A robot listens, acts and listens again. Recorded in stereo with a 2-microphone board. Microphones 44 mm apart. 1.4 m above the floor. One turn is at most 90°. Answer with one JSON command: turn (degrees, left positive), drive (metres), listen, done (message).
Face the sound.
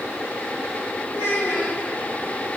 {"turn": 70}
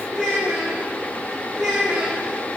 {"turn": -10}
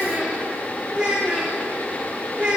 {"turn": -20}
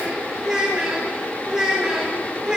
{"turn": -10}
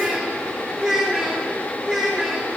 {"done": "Facing the child speaking."}